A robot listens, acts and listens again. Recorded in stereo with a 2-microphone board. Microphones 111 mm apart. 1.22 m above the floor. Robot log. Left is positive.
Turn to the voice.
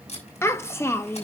note: The child speaking: about 25° left or 155° left.
cmd yaw +25
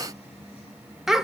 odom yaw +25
end: Facing the child speaking.